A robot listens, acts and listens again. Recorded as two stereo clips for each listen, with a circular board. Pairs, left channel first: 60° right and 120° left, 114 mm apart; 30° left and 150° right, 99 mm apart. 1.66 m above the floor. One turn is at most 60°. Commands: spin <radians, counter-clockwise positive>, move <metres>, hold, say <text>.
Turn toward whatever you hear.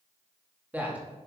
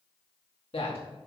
spin 0.79
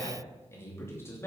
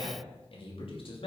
say Facing the man speaking, 2 to 4 m away.